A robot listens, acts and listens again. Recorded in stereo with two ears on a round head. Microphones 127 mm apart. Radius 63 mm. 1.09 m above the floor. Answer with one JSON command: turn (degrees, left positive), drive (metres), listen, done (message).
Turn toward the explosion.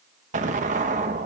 {"turn": -55}
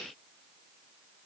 {"listen": true}
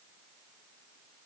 {"done": "I heard an explosion, but can't make it out now. It was about straight ahead or 70° right."}